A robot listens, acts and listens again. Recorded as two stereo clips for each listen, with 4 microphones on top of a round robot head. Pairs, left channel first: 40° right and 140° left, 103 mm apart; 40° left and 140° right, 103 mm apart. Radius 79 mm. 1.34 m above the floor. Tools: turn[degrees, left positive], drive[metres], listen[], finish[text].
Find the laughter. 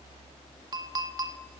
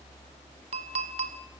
Action: listen[]
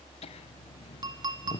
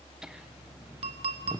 Thought: The laughter: 80° right.
Action: turn[-80]
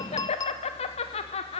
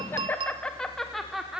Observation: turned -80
Thought: The laughter is now 55° right.
Action: turn[-55]
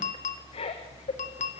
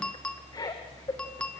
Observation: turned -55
Thought: The laughter is now 20° right.
Action: turn[-20]
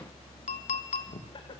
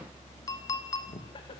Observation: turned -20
Action: finish[Facing the laughter, 2 to 4 m away.]